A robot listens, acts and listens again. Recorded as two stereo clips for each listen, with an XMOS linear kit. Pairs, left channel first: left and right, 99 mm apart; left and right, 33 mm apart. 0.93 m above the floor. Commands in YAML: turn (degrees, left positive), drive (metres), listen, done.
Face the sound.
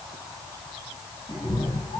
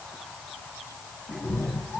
turn: 70
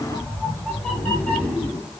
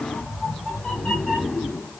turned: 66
turn: 15
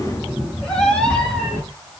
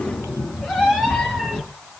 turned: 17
turn: 10
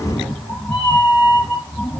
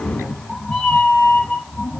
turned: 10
done: "Facing the cat meowing, 2 to 4 m away."